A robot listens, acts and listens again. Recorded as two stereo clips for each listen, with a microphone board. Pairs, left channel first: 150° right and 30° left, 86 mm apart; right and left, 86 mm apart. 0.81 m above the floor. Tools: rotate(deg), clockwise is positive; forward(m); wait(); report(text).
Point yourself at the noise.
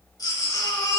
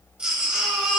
rotate(-170)
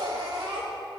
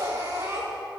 rotate(-35)
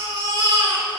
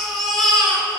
report("Facing the baby crying.")